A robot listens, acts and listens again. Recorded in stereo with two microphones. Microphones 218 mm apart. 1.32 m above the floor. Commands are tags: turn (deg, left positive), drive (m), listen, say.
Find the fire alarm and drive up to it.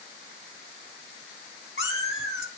<listen/>
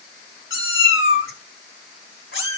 <listen/>
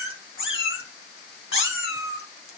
<say>I can't make out a fire alarm, only a cat meowing.</say>